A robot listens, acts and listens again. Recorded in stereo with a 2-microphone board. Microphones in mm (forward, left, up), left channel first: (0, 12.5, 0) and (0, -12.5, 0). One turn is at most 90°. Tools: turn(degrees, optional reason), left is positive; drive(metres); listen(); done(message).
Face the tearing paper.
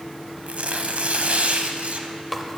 turn(degrees=-65, reason="The tearing paper: about 65° right or 115° right.")
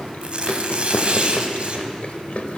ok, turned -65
turn(degrees=-45, reason="So it is at 45° right.")
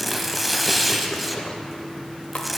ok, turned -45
done("Found it: tearing paper, straight ahead.")